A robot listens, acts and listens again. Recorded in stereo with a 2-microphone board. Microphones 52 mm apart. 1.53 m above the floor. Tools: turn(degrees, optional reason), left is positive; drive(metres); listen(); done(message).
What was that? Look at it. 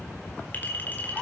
turn(degrees=35, reason="The clink: about 35° left or 145° left.")
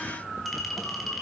done("Facing the clink, over 4 m away.")